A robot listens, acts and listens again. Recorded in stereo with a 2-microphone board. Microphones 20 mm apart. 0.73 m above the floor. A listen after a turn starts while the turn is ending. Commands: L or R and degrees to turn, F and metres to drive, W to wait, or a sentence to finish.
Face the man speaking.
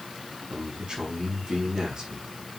R55
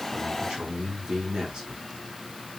R65
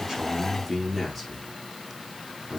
Found it: a man speaking, straight ahead.